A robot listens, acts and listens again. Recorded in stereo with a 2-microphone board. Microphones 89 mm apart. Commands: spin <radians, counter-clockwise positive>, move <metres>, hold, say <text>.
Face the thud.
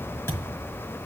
spin 0.52
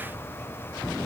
hold
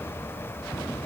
say I heard a thud, but can't make it out now. It was about straight ahead or 120° left.